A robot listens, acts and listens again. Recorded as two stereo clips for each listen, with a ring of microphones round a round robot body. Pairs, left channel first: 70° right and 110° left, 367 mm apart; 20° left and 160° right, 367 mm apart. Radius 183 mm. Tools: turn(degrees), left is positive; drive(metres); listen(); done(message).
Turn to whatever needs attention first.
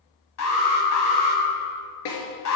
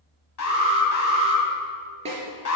turn(degrees=-20)
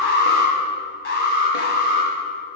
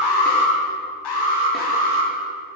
done("Found it: an alarm, straight ahead.")